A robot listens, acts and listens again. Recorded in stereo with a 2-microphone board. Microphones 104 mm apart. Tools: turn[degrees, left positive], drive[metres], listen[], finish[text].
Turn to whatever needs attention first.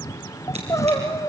Thought: The crying: about 30° left or 150° left.
Action: turn[30]
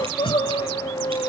Thought: So it is at 120° left.
Action: turn[120]
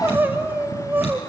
Thought: The crying is now 20° right.
Action: turn[-20]
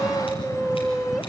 Action: finish[Facing the crying.]